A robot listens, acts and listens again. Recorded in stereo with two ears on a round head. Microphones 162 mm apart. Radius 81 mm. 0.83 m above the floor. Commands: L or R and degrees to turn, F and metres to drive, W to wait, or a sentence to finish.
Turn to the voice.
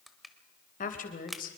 L50
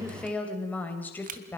L10
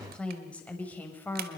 L10
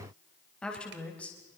Found it: a woman speaking, straight ahead.